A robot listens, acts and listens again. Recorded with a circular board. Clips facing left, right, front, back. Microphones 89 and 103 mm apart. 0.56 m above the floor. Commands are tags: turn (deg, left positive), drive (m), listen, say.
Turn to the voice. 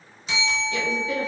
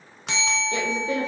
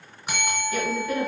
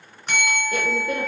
<turn deg="-135"/>
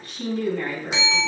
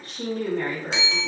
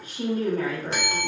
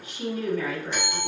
<turn deg="-45"/>
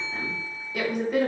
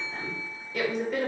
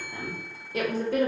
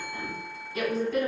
<say>Found it: a woman speaking, straight ahead, 1 to 2 m away.</say>